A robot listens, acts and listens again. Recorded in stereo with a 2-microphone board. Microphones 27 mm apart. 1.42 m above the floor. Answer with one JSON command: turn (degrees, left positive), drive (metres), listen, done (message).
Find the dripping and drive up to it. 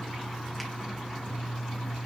{"listen": true}
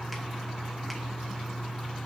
{"listen": true}
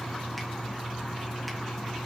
{"done": "I can't make out dripping."}